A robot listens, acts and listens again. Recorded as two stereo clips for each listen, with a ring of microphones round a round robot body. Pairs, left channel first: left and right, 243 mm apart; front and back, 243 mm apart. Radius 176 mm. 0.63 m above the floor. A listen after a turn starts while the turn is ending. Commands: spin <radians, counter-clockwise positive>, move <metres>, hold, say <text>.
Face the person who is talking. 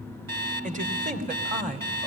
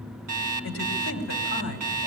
spin -0.61
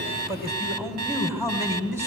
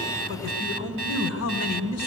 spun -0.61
spin -0.17
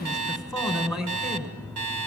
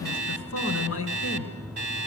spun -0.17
say Facing the man speaking, 2 to 4 m away.